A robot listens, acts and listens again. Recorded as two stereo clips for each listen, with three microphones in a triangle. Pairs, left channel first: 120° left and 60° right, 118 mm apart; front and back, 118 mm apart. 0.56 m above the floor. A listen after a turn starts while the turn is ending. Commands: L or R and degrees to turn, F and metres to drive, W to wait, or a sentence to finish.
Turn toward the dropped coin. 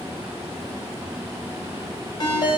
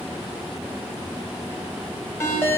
W
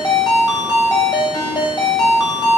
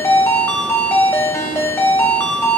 W
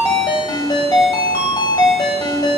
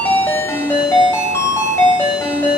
I can't make out a dropped coin to turn to.